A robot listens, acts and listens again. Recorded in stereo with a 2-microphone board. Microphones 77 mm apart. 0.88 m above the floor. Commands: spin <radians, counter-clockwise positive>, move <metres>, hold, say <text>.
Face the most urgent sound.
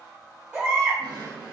spin -0.35
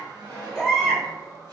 say Facing the baby crying.